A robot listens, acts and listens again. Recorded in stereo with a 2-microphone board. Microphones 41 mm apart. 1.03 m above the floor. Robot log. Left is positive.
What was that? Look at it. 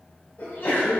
note: The sneeze: about 60° left or 120° left.
cmd yaw +60
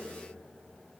cmd idle
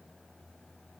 end: I heard a sneeze, but can't make it out now. It was about straight ahead or 60° left.